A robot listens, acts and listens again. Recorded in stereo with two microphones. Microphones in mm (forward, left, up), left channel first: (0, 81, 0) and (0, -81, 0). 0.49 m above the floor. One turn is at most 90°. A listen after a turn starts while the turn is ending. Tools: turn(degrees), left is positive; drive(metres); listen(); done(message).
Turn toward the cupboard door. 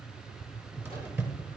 turn(degrees=-30)
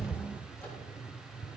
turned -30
turn(degrees=20)
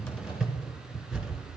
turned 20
done("Found it: a cupboard door, straight ahead, 1 to 2 m away.")